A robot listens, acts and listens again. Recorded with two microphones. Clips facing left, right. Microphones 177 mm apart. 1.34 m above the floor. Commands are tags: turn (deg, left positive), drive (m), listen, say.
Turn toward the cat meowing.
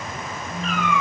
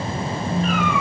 <turn deg="-45"/>
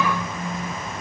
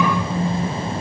<listen/>
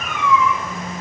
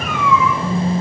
<say>Facing the cat meowing, over 4 m away.</say>